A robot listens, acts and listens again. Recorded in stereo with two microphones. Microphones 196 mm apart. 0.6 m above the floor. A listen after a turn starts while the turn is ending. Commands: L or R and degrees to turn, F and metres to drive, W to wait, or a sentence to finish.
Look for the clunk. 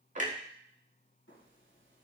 R40
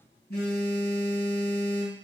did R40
W
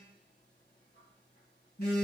I heard a clunk, but can't make it out now. It was about straight ahead or 100° right.